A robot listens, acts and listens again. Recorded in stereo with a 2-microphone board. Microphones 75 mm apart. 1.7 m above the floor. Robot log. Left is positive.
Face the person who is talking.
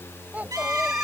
note: The child speaking: about 25° right or 155° right.
cmd yaw -25
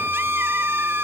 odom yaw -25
cmd idle
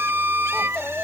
end: Facing the child speaking.